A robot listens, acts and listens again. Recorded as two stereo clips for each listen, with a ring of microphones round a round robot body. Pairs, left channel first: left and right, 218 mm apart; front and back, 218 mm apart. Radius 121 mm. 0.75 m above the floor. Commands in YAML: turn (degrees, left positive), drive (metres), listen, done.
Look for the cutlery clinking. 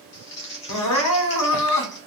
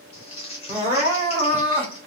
listen: true
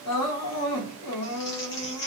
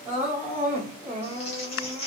listen: true
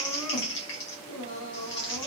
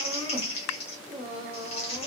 done: "I can't make out cutlery clinking to turn to."